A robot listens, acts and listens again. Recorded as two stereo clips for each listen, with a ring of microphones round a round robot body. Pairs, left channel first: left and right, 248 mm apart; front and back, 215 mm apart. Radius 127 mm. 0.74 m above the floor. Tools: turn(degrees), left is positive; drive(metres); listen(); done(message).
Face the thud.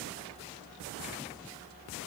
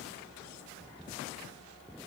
listen()
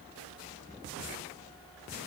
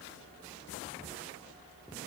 listen()
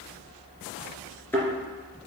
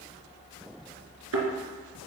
turn(degrees=175)
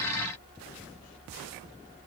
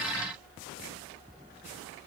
done("I heard a thud from this way, but can't make it out now.")